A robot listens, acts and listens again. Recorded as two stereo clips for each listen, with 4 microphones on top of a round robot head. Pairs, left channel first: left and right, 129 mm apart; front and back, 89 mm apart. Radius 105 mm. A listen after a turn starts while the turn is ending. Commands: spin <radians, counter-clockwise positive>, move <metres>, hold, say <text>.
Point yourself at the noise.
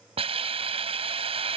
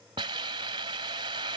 spin -2.36
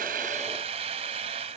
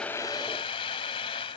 spin -0.70
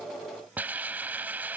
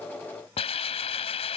spin -0.17
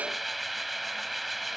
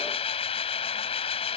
say Facing the hiss.